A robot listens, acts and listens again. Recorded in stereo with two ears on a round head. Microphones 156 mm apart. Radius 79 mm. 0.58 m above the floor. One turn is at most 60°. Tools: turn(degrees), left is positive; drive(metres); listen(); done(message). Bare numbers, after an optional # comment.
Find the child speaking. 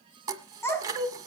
turn(30)
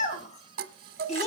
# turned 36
# So it is at 140° left.
turn(60)
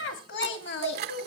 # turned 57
# The child speaking is now 75° left.
turn(60)
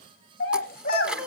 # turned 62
# The child speaking is now 55° left.
turn(55)
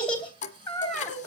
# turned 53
done("Found it: a child speaking, straight ahead, 2 to 4 m away.")